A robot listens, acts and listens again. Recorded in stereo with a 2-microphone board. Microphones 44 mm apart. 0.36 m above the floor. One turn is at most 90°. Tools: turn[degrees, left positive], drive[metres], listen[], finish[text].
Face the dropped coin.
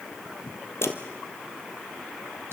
Thought: The dropped coin: about 65° left or 115° left.
Action: turn[65]
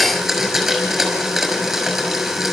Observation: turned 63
Action: listen[]
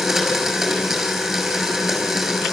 Action: finish[I heard a dropped coin, but can't make it out now. It was about 5° left or 50° left.]